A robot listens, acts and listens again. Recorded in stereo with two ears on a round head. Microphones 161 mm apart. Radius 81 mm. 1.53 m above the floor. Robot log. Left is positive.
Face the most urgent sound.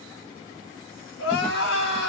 cmd yaw +90
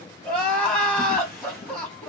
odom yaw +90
note: So it is at 10° left.
cmd yaw +10
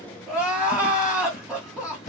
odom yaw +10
end: Facing the crying, 1 to 2 m away.